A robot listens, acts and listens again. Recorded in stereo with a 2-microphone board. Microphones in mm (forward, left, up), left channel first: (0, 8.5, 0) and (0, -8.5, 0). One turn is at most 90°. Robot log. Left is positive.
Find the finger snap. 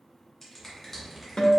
note: The finger snap: about 25° left or 155° left.
cmd yaw +25
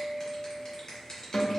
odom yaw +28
note: So it is at 125° left.
cmd yaw +90
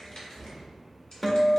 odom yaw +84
note: Nothing new. It was at 40° left.
cmd yaw +40
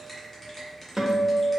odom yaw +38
end: Found it: a finger snap, straight ahead.